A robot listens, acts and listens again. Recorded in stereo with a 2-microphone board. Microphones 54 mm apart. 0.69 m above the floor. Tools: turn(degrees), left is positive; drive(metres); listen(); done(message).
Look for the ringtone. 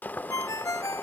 turn(degrees=90)
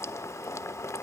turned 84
listen()
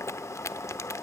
listen()
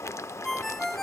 done("Found it: a ringtone, straight ahead, under 1 m away.")